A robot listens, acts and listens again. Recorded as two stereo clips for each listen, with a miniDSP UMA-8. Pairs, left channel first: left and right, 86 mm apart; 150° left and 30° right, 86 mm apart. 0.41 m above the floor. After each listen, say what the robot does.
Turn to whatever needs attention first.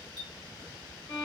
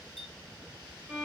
Keep listening.
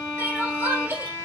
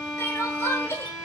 Turn 155° right.
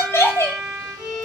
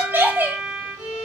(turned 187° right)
Turn 35° left.
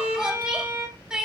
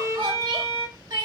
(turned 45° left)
Turn 10° right.
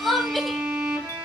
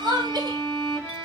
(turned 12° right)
Found it: crying, straight ahead.